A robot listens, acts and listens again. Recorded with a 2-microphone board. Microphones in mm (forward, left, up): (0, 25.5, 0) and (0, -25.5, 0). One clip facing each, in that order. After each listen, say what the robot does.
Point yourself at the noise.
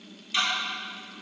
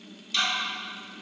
Turn 20° left.
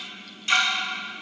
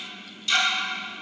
Turn 140° left.
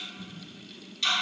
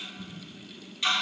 Turn 15° right.
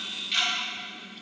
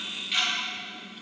Found it: ticking, straight ahead.